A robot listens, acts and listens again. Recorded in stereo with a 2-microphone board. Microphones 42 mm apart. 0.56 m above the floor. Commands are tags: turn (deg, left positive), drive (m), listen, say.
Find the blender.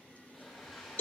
<turn deg="30"/>
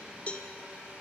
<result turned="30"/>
<turn deg="-30"/>
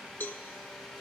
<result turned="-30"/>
<say>Facing the blender, 2 to 4 m away.</say>